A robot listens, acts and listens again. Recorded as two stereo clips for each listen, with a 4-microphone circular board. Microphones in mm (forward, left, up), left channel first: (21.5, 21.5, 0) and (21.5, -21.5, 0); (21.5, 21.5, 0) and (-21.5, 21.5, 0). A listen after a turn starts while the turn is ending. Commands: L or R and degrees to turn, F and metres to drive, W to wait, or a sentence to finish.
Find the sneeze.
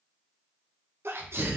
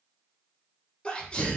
R65
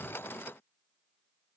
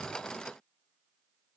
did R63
I heard a sneeze from this way, but can't make it out now.